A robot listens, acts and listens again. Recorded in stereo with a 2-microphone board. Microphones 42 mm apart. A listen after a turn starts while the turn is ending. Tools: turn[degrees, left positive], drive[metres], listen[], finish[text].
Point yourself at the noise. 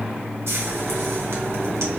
Action: turn[-90]
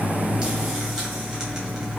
Action: listen[]
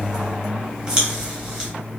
Thought: The frying is now 15° right.
Action: turn[-15]
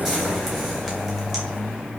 Action: listen[]
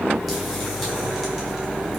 Action: listen[]
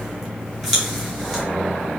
Action: finish[Found it: frying, straight ahead.]